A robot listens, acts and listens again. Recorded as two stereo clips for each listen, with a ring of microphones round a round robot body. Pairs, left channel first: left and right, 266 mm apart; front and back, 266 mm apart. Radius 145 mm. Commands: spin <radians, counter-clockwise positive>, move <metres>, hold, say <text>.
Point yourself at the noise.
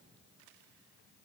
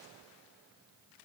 hold
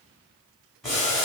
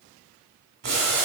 spin 3.14
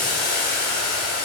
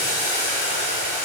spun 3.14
spin 0.70
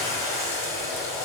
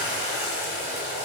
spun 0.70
spin 0.17
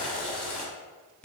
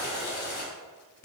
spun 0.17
say Facing the boiling.